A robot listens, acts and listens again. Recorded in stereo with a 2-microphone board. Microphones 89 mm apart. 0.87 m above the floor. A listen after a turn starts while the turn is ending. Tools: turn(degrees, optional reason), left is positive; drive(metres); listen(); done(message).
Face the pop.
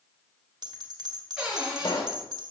turn(degrees=60, reason="The pop: about 60° left or 120° left.")
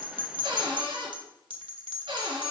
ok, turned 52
listen()
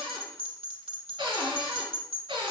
done("I heard a pop, but can't make it out now. It was about 5° left or 70° left.")